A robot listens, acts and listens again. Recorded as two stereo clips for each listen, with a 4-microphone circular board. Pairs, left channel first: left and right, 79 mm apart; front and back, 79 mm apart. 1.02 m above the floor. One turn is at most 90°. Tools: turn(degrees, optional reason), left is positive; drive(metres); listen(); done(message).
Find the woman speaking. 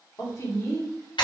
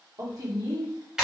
turn(degrees=90, reason="The woman speaking: 135° left.")
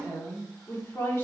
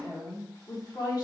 turn(degrees=30, reason="The woman speaking is now 30° left.")
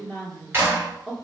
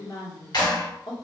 turn(degrees=10, reason="The woman speaking is now 10° left.")
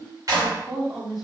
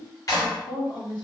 done("Found it: a woman speaking, straight ahead.")